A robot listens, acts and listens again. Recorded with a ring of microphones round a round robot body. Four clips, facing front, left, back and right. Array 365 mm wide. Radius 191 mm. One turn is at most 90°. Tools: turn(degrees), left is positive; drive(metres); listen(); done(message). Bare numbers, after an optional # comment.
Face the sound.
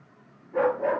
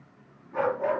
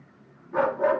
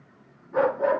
# The dog barking: 160° right.
turn(-90)
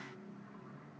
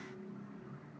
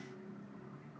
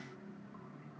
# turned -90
# Nothing new. It was at 70° right.
turn(-70)
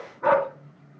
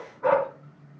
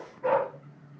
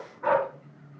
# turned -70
done("Found it: a dog barking, straight ahead.")